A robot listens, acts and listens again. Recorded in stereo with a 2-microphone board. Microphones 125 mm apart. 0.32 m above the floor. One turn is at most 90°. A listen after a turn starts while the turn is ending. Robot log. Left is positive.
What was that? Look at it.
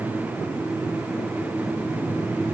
cmd idle
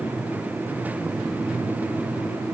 cmd idle
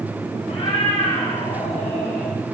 note: The cat meowing: about 55° left or 125° left.
cmd yaw +55
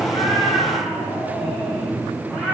end: Found it: a cat meowing, straight ahead, over 4 m away.